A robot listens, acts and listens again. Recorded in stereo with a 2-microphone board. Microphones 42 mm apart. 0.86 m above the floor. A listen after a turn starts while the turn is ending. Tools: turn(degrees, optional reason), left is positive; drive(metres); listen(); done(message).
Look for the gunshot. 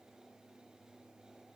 listen()
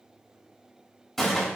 turn(degrees=30)
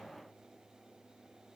listen()
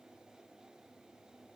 done("I heard a gunshot, but can't make it out now. It was about 25° right or 145° left.")